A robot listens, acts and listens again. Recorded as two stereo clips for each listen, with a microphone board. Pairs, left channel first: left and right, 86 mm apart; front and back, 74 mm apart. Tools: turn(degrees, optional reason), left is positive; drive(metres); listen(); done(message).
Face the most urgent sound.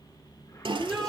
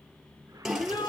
done("Found it: a shout, straight ahead.")